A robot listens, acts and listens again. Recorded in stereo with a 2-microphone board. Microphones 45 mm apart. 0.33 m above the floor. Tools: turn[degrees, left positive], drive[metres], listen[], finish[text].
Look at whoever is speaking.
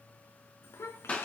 Action: turn[90]
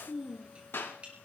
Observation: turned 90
Thought: So it is at 20° right.
Action: turn[-20]
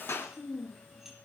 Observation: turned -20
Thought: The child speaking is now 15° right.
Action: turn[-15]
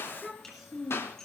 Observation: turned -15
Thought: The child speaking is now 10° right.
Action: turn[-10]
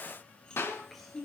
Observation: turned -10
Action: finish[Found it: a child speaking, straight ahead, 2 to 4 m away.]